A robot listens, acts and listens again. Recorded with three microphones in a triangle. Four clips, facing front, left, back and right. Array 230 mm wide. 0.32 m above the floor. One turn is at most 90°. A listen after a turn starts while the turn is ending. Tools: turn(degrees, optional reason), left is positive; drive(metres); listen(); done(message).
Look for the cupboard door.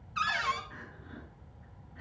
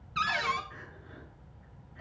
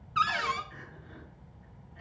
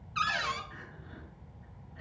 turn(degrees=90, reason="The cupboard door: 140° left.")
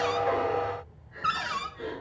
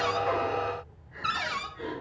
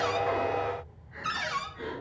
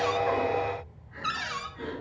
turn(degrees=45, reason="The cupboard door is now 45° left.")
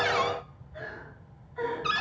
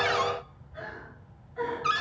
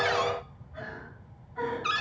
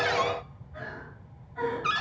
done("Facing the cupboard door, under 1 m away.")